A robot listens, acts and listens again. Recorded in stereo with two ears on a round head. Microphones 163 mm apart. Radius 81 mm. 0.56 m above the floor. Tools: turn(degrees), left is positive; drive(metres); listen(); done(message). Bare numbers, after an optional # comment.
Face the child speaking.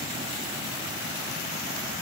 listen()
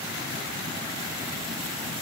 listen()
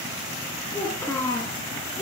turn(30)
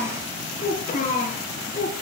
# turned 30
# So it is at 135° left.
turn(135)
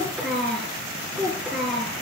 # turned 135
done("Facing the child speaking, over 4 m away.")